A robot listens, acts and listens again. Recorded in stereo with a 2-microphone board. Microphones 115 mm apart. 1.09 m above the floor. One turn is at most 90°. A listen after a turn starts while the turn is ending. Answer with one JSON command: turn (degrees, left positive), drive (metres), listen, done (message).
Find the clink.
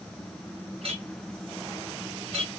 {"turn": -60}
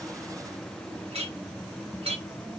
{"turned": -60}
{"turn": -60}
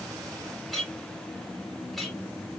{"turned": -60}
{"done": "Found it: a clink, straight ahead, 1 to 2 m away."}